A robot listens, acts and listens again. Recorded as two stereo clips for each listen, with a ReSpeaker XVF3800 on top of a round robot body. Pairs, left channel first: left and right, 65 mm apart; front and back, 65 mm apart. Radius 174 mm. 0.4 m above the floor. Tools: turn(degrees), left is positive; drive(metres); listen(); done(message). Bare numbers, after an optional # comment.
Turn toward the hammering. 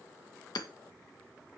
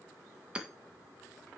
# The hammering: 105° left.
turn(105)
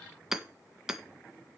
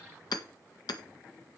done("Found it: hammering, straight ahead.")